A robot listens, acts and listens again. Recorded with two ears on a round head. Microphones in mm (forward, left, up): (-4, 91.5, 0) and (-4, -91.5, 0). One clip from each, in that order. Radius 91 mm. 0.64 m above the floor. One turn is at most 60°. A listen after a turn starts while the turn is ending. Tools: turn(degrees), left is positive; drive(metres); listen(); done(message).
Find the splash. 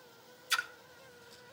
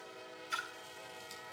turn(degrees=60)
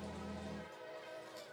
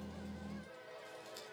listen()
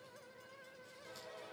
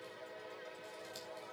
done("I heard a splash, but can't make it out now. It was about 10° left or 50° left.")